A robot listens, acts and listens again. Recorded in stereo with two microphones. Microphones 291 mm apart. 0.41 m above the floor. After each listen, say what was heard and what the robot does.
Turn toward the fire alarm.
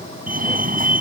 The fire alarm: about 30° right or 150° right. Turn 30° right.
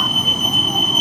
Found it: a fire alarm, straight ahead.